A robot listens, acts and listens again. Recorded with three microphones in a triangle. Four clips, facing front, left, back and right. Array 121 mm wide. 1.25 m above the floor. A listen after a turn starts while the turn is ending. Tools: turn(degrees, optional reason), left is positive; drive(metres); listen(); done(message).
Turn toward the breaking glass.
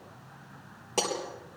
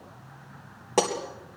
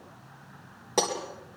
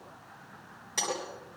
turn(degrees=110, reason="The breaking glass: 110° left.")
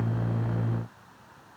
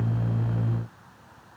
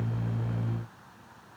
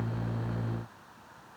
done("I heard breaking glass from this way, but can't make it out now.")